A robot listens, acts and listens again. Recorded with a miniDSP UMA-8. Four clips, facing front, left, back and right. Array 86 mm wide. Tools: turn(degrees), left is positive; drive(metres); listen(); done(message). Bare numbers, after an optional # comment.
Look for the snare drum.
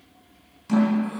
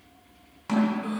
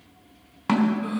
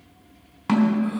# The snare drum: 155° right.
turn(-155)
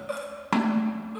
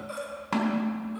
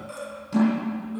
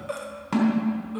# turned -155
done("Found it: a snare drum, straight ahead, 2 to 4 m away.")